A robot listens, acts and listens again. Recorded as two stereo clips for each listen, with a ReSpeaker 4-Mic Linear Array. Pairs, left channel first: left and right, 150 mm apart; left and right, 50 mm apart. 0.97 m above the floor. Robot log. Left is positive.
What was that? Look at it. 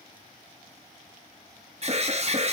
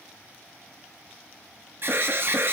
note: The alarm: about 45° right or 135° right.
cmd yaw -45
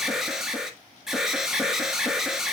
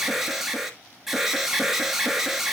end: Found it: an alarm, straight ahead.